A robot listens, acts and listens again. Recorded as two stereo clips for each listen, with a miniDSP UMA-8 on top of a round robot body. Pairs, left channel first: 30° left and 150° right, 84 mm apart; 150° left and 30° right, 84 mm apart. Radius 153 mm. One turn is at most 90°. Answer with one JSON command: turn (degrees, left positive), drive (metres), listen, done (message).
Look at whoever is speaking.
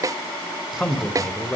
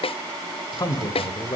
{"turn": 90}
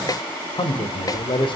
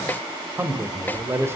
{"turn": 30}
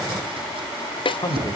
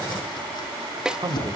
{"done": "Facing the man speaking, 2 to 4 m away."}